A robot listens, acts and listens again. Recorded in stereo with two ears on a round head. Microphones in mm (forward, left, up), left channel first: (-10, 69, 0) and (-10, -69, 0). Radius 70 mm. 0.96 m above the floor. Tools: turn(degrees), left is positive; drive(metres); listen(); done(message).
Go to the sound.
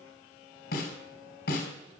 turn(degrees=75)
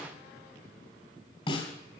turn(degrees=35)
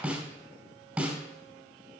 drive(metres=1.0)
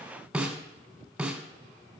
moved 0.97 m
drive(metres=1.0)
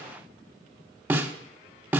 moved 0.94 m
turn(degrees=-10)
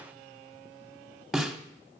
drive(metres=1.0)
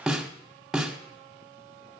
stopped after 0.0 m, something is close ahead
done("I am next to the snare drum.")